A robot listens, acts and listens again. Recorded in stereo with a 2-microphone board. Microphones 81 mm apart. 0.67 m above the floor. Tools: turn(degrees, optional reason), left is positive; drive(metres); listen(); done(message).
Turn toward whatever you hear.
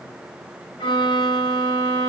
turn(degrees=90)
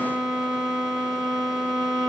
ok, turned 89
done("Facing the violin, over 4 m away.")